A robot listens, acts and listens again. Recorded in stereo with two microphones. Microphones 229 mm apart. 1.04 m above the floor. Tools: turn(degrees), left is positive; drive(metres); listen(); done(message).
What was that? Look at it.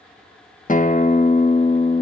turn(degrees=35)
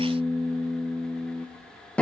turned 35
done("Found it: a guitar, straight ahead.")